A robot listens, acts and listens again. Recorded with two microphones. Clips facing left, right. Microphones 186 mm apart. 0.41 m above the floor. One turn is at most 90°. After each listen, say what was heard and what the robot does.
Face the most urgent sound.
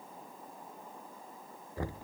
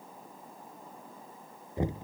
Keep listening.
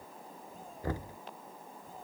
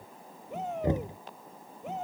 Turn 90° right.
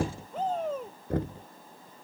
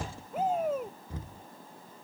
So it is at 10° right. Turn 10° right.
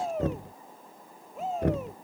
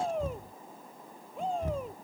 Facing the shout.